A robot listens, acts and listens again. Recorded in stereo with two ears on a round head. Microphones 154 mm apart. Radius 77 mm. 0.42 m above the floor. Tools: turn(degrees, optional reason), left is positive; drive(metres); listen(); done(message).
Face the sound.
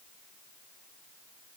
listen()
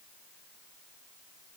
listen()
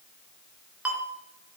turn(degrees=-30)
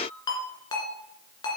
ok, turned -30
turn(degrees=25, reason="So it is at 25° left.")
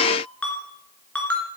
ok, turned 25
done("Found it: a ringtone, straight ahead.")